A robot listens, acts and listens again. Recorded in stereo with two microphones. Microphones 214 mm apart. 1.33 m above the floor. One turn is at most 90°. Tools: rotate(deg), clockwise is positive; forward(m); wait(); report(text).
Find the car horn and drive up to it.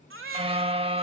rotate(25)
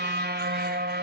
rotate(90)
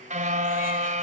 rotate(35)
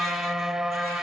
forward(1.0)
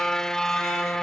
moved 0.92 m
forward(1.0)
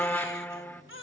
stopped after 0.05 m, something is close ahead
rotate(-10)
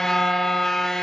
report("Arrived at the car horn, straight ahead.")